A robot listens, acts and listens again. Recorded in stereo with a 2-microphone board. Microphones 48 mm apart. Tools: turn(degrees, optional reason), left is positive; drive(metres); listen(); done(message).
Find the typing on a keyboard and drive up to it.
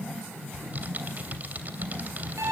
turn(degrees=-35, reason="The typing on a keyboard: about 35° right or 145° right.")
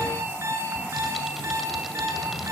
listen()
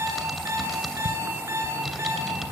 drive(metres=1.0)
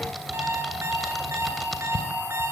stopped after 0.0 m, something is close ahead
done("Something is in my way. I am facing the typing on a keyboard but have not reached it.")